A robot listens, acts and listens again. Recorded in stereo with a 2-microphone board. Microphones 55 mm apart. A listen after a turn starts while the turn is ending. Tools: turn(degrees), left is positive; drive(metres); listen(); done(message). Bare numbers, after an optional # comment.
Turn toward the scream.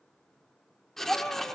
# The scream: about 25° left or 155° left.
turn(25)
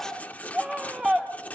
done("Found it: a scream, straight ahead.")